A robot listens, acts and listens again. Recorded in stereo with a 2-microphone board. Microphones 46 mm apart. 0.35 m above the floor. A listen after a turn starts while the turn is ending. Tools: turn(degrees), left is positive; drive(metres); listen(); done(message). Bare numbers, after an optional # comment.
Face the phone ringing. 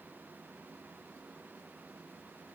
listen()
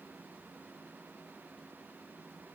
listen()
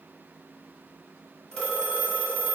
# The phone ringing: about 15° left or 165° left.
turn(15)
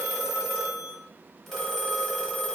done("Facing the phone ringing, under 1 m away.")